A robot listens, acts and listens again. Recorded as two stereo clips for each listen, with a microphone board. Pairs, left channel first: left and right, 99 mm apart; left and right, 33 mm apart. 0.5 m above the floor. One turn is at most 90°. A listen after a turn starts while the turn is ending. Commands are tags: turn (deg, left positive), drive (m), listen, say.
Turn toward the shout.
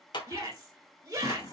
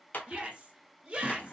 <turn deg="-30"/>
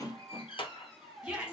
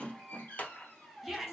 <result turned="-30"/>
<say>Found it: a shout, straight ahead, 1 to 2 m away.</say>